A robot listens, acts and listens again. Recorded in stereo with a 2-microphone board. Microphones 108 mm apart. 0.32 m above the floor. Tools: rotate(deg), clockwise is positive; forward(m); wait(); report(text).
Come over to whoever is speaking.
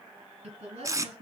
rotate(75)
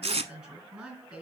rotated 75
forward(1.0)
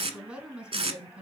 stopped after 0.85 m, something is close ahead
report("Something is in my way. I am facing the woman speaking but have not reached it.")